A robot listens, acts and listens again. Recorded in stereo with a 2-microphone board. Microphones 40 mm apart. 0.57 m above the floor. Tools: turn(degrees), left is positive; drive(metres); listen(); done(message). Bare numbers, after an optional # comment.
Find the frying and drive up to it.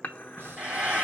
# The frying: about 35° right or 145° right.
turn(-35)
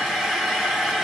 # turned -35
drive(1.0)
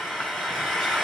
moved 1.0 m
drive(1.0)
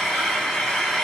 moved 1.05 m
# The frying is now 10° left.
turn(10)
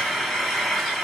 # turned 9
drive(1.0)
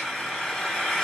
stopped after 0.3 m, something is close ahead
done("I am next to the frying.")